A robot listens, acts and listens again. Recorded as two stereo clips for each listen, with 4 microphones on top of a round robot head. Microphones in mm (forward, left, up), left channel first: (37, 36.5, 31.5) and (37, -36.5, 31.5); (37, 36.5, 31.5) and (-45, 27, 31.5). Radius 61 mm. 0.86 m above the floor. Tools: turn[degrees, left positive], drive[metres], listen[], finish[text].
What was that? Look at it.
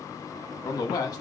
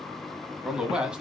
Thought: The man speaking: 110° left.
Action: turn[110]
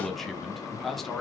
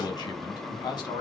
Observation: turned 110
Action: finish[Facing the man speaking, 1 to 2 m away.]